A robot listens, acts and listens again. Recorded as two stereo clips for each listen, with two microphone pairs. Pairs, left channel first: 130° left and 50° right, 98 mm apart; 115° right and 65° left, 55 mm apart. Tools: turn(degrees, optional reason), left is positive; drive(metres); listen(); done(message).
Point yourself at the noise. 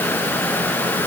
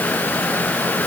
listen()
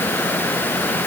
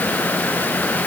listen()
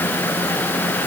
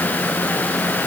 done("I can't make out anything to turn to.")